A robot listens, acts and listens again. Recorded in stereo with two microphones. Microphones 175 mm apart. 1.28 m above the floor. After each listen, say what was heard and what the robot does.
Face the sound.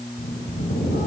The bird: about 75° left or 105° left. Turn 75° left.
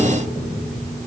Facing the bird, over 4 m away.